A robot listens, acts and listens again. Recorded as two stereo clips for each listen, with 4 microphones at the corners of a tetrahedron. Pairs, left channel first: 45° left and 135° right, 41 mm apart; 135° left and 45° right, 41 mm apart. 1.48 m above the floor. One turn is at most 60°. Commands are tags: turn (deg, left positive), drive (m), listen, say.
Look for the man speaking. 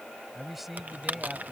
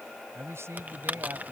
<turn deg="-50"/>
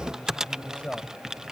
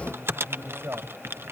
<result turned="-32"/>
<turn deg="-20"/>
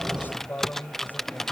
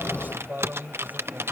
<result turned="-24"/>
<say>Facing the man speaking.</say>